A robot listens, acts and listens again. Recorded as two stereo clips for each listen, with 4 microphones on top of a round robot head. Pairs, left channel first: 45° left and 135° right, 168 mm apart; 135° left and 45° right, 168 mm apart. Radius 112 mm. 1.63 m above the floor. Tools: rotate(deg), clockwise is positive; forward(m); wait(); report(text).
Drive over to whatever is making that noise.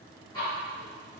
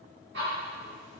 rotate(25)
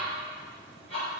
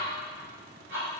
rotate(10)
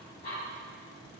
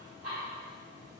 forward(1.0)
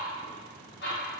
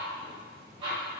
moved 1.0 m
rotate(-15)
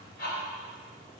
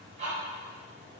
forward(1.0)
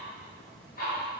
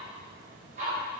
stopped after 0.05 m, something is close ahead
report("Arrived at the ticking, straight ahead.")